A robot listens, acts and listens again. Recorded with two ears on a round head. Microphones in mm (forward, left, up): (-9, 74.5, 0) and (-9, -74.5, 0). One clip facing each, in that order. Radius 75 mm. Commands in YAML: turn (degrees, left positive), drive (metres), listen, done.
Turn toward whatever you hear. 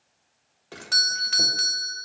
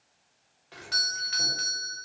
turn: 60
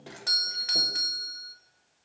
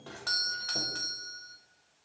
turn: 20
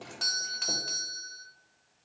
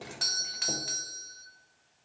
done: "Facing the doorbell, 1 to 2 m away."